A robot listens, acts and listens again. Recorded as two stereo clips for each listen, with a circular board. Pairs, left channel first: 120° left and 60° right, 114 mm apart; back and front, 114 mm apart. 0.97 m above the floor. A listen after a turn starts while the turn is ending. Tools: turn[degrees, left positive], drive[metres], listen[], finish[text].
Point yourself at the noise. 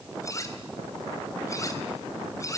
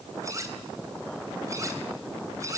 Thought: The cutlery clinking: 60° left.
Action: turn[60]
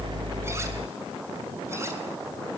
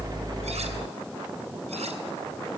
Action: listen[]
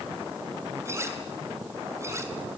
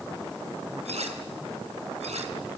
Action: finish[Found it: cutlery clinking, straight ahead, 2 to 4 m away.]